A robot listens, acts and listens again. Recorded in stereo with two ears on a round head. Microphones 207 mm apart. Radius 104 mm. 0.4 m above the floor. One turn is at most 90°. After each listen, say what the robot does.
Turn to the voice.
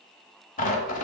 Keep listening.
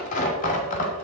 Keep listening.
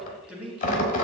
Turn 30° right.
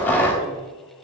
Keep listening.
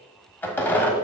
Keep listening.
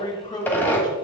Turn 20° left.
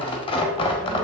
Keep listening.
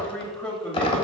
Facing the man speaking.